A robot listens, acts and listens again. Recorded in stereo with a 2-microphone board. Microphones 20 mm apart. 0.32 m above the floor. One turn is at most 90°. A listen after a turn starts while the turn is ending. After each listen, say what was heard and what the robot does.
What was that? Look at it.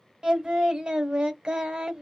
The singing: about 45° right or 135° right. Turn 45° right.
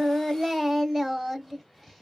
So it is at 10° right. Turn 10° right.
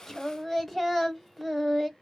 Facing the singing, under 1 m away.